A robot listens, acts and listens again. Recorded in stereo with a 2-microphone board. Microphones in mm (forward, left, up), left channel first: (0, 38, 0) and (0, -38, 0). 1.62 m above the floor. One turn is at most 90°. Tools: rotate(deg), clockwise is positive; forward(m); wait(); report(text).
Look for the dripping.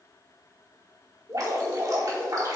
rotate(55)
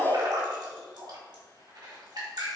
rotate(70)
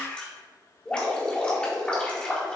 rotate(-15)
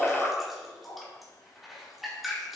report("Found it: dripping, straight ahead, 2 to 4 m away.")